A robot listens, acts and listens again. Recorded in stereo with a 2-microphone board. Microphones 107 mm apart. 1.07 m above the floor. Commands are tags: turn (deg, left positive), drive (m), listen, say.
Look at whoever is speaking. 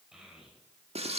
<turn deg="-30"/>
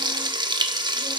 <listen/>
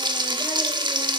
<listen/>
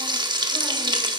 <say>I heard a child speaking, but can't make it out now. It was about 25° left or 145° right.</say>